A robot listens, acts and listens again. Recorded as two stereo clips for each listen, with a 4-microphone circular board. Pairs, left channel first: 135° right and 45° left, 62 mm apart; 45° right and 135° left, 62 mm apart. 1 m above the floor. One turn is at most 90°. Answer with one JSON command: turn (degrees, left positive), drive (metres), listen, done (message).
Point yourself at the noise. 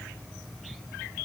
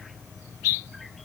{"listen": true}
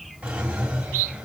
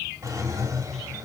{"turn": 90}
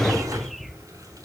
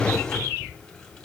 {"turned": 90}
{"turn": 35}
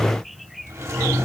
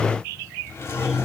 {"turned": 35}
{"done": "Facing the drawer, 2 to 4 m away."}